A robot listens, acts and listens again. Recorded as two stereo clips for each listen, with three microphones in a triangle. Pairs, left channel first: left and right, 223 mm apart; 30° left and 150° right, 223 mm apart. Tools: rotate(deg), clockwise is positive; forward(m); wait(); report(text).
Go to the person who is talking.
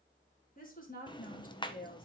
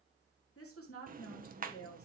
rotate(-40)
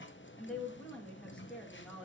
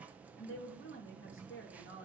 forward(1.0)
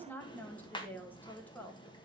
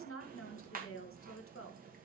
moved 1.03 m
rotate(-10)
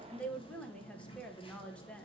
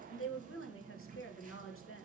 forward(1.0)
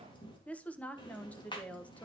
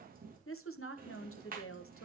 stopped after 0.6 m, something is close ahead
report("I am next to the woman speaking.")